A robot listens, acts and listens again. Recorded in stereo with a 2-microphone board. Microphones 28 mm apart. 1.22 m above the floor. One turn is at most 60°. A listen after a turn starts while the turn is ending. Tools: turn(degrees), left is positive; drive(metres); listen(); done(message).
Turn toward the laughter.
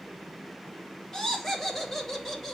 turn(degrees=30)
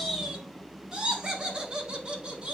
turn(degrees=-30)
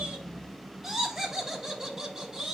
turn(degrees=-10)
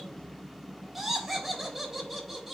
done("Facing the laughter.")